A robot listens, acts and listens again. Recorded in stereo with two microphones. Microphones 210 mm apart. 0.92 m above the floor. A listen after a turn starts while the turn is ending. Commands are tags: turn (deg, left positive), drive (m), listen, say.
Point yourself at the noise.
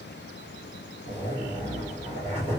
<turn deg="-35"/>
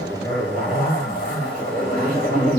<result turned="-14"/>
<turn deg="-135"/>
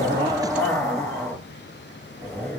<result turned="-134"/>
<say>Found it: a zipper, straight ahead, 1 to 2 m away.</say>